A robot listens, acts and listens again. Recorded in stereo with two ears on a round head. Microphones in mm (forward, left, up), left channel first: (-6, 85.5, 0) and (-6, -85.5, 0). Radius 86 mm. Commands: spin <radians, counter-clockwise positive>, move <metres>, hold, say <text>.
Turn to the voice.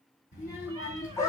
spin 0.79
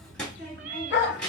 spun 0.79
say Facing the child speaking.